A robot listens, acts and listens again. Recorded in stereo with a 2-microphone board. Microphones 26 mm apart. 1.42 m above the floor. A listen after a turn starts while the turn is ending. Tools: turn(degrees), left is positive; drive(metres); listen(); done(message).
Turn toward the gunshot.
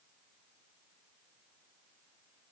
listen()
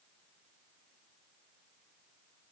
listen()
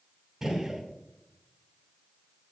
turn(degrees=-15)
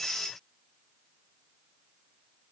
listen()
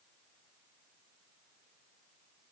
done("I heard a gunshot, but can't make it out now. It was about straight ahead or 150° right.")